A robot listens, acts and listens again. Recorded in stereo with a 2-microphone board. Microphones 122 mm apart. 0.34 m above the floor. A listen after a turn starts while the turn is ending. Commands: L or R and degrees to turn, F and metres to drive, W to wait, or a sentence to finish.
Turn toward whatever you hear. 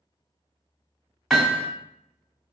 L30
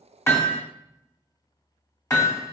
L150
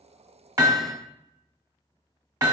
R35
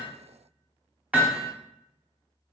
R10
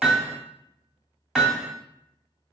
Found it: hammering, straight ahead.